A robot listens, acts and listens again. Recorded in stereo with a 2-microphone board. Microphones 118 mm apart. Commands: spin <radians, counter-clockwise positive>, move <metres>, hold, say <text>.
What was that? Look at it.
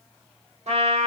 spin -1.13
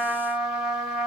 say Facing the trumpet.